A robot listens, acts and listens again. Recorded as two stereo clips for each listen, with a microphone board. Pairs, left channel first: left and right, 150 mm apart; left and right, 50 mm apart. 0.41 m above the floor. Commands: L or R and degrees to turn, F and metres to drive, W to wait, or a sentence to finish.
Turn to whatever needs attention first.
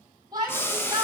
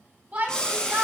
R25
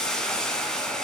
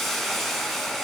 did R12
W
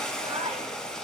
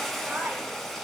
R145
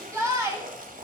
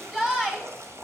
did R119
R20
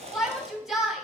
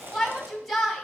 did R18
Found it: a shout, straight ahead.